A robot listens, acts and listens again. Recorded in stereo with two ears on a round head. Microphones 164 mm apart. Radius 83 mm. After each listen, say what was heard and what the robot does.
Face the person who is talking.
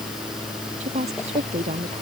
The woman speaking: about 40° right or 140° right. Turn 40° right.
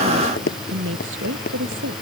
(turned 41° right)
So it is at 100° right. Turn 100° right.
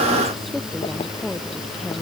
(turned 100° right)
Facing the woman speaking.